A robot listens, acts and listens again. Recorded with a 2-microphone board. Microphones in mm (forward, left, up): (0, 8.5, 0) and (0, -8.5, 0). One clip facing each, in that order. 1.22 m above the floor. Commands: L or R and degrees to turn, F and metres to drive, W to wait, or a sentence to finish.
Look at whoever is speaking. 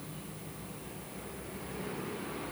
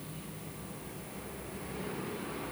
W
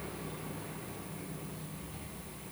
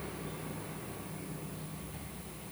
W
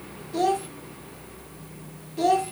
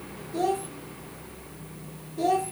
L35
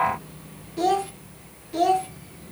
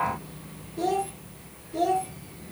L105
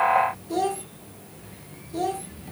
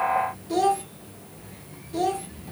R15
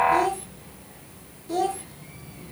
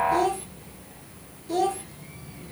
Facing the child speaking.